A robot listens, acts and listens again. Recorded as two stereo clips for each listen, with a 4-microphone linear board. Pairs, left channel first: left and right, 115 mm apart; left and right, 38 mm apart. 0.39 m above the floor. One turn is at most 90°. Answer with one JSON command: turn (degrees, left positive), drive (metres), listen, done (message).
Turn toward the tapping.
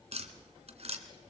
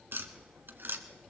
{"turn": -65}
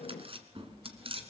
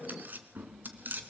{"turn": -50}
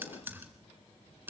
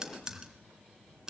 {"turn": -15}
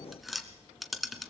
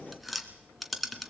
{"done": "Facing the tapping."}